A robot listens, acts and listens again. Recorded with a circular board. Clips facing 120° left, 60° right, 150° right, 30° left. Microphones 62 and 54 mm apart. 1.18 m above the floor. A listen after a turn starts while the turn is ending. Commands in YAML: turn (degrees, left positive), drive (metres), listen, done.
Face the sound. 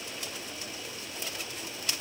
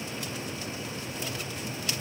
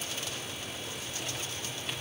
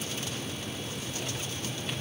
listen: true
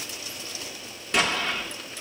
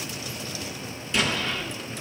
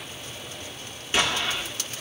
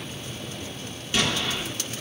turn: 145
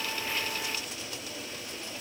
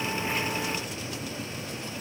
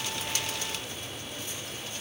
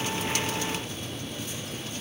done: "I heard an explosion from this way, but can't make it out now."